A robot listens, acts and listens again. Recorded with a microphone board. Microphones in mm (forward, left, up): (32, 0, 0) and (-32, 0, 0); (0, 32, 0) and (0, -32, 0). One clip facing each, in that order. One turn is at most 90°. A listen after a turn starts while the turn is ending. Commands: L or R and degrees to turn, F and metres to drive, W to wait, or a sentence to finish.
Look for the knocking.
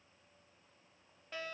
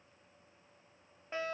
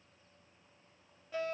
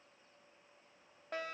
W
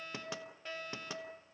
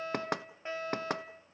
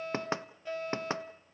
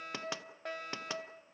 L90
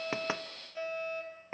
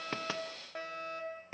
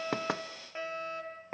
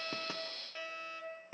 L55
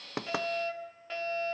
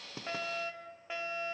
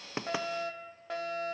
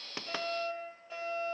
W
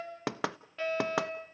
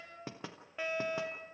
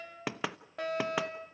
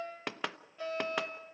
Found it: knocking, straight ahead, under 1 m away.